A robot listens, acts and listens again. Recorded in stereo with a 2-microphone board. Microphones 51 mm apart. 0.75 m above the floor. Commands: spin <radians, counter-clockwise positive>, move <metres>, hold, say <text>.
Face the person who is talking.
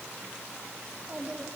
spin -0.52
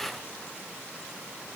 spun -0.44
hold
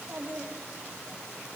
spin -2.18
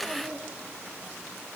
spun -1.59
spin -0.61
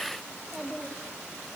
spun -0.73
spin 0.17
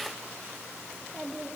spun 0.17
say Facing the child speaking, over 4 m away.